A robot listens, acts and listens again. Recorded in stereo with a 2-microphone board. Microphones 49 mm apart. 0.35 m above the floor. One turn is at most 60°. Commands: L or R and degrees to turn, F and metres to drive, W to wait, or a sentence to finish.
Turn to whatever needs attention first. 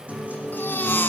L45
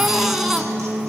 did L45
Facing the baby crying, 1 to 2 m away.